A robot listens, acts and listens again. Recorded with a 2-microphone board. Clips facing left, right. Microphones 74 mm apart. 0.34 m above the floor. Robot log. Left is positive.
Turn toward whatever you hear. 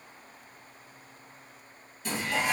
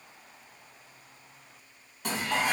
note: The dishes clattering: about 60° right or 120° right.
cmd yaw -60
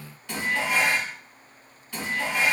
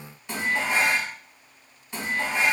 note: So it is at 20° right.
cmd yaw -20
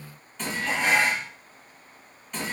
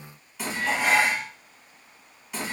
end: Facing the dishes clattering.